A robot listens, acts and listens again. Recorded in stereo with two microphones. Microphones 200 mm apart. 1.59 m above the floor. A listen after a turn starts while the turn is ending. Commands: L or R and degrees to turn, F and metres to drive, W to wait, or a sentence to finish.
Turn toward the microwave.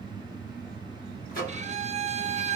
L45
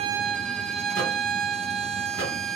W
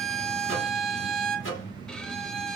L90
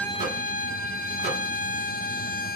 W
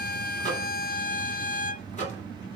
L40
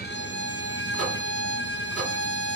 W
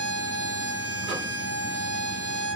W
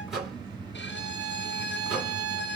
Facing the microwave.